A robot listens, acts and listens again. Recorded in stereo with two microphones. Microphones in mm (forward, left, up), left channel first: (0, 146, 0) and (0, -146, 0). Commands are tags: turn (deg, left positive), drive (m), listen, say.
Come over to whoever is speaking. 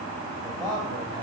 <turn deg="-30"/>
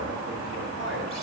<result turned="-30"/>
<turn deg="-135"/>
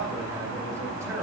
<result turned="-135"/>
<turn deg="-10"/>
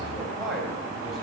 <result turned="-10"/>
<drive m="1.0"/>
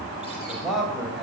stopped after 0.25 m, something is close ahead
<say>Something is in my way. I am facing the man speaking but have not reached it.</say>